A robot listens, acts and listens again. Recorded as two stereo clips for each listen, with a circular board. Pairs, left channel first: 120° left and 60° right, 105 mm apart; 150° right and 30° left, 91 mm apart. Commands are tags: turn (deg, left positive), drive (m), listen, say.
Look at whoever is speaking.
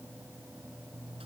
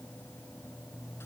<listen/>
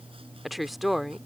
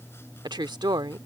<turn deg="30"/>
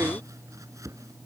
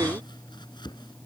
<listen/>
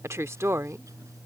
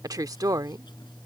<say>Found it: a woman speaking, straight ahead.</say>